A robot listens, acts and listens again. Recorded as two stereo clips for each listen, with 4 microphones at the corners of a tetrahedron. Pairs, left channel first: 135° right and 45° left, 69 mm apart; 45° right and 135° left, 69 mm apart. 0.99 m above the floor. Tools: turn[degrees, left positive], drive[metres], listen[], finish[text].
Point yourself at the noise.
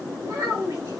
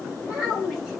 Thought: The child speaking: 50° left.
Action: turn[50]
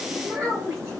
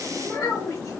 Action: finish[Found it: a child speaking, straight ahead.]